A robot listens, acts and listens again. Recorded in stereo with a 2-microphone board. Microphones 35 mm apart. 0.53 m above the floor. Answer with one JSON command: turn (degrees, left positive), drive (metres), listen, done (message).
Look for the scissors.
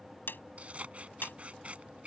{"turn": -35}
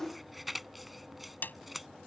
{"done": "Facing the scissors."}